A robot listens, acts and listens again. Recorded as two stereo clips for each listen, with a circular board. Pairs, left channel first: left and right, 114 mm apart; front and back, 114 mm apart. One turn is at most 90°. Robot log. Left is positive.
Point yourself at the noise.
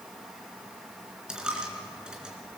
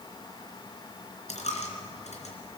end: Facing the dropped coin, 2 to 4 m away.